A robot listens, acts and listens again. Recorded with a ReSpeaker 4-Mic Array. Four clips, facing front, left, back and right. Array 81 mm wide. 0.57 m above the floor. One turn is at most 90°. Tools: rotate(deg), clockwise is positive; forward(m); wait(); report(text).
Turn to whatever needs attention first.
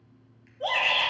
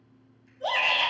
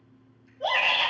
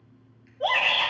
rotate(85)
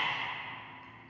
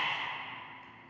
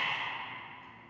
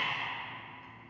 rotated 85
wait()
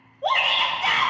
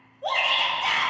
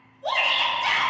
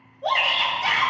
report("Found it: a shout, straight ahead.")